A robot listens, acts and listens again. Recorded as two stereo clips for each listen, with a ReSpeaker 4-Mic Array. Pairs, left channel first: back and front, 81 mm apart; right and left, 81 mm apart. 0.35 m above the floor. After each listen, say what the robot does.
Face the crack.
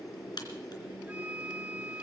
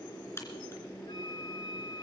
Turn 150° right.
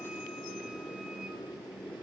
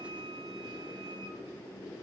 Facing where the crack came from. I can't hear it now.